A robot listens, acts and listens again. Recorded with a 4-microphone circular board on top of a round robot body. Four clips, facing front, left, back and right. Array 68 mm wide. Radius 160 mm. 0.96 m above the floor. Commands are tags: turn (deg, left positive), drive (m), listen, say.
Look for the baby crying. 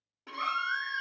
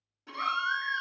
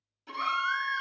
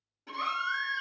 <turn deg="80"/>
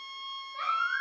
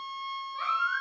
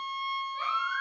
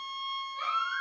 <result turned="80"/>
<turn deg="30"/>
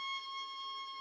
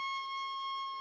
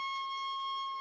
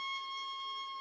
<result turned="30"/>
<listen/>
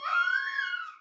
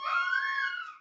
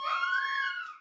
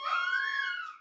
<turn deg="-10"/>
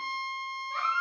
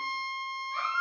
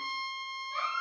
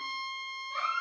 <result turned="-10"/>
<say>Found it: a baby crying, straight ahead, under 1 m away.</say>